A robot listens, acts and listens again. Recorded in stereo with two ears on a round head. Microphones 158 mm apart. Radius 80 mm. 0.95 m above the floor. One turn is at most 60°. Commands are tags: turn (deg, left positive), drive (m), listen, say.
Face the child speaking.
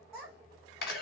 <turn deg="30"/>
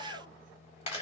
<turn deg="60"/>
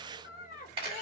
<turn deg="45"/>
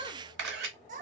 <turn deg="-50"/>
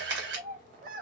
<turn deg="-50"/>
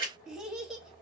<say>Facing the child speaking, 1 to 2 m away.</say>